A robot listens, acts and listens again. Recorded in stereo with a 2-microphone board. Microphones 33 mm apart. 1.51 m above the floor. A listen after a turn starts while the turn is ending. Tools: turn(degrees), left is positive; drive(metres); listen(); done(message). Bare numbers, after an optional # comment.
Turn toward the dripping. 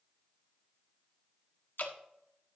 # The dripping: about 75° left or 105° left.
turn(75)
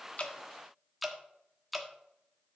done("Facing the dripping.")